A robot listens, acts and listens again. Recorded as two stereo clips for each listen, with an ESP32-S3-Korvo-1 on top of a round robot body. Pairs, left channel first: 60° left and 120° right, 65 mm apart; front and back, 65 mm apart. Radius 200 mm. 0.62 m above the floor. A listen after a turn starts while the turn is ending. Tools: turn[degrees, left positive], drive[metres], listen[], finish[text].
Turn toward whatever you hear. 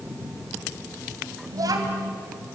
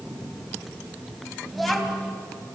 Thought: The child speaking: 90° right.
Action: turn[-90]
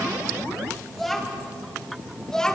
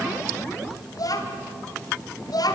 Thought: The child speaking is now 20° right.
Action: turn[-20]
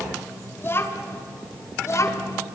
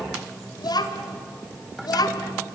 Thought: The child speaking is now 15° left.
Action: turn[15]
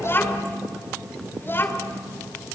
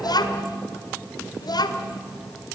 Action: finish[Found it: a child speaking, straight ahead.]